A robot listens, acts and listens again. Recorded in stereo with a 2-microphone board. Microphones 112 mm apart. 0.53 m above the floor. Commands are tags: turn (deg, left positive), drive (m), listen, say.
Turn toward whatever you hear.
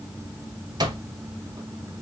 <turn deg="-35"/>
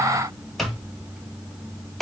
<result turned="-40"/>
<say>Found it: an alarm clock, straight ahead, 1 to 2 m away.</say>